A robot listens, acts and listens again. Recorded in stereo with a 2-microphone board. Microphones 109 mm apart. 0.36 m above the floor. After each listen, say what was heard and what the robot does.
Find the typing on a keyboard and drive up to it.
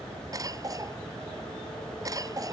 Keep listening.
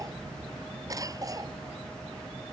Keep listening.
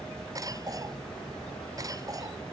I can't make out typing on a keyboard to turn to.